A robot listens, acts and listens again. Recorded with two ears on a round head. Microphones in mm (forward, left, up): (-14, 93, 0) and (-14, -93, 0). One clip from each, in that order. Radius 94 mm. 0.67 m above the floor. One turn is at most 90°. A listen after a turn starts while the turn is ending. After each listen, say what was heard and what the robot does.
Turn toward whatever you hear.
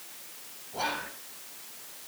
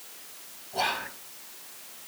Turn 90° right.
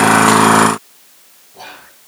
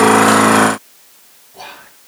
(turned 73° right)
So it is at 10° right. Turn 10° right.
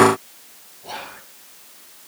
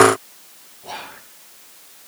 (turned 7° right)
Facing the whispering, 2 to 4 m away.